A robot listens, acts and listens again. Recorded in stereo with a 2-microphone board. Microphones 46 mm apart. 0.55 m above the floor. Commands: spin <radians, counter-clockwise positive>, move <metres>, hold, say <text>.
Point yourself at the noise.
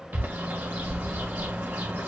spin -0.79
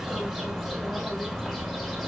say Facing the bird.